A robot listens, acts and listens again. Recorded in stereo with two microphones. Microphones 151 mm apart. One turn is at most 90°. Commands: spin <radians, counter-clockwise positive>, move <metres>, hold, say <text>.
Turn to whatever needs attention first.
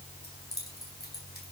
hold
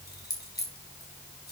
hold
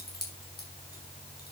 say I can't make out anything urgent, only keys jangling.